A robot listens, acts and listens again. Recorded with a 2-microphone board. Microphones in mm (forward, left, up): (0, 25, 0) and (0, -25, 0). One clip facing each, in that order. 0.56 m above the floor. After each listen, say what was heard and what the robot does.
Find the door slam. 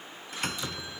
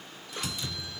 The door slam: about 55° left or 125° left. Turn 55° left.
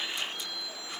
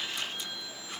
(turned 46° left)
Keep listening.
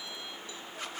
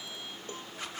I heard a door slam, but can't make it out now. It was about 10° left or 80° left.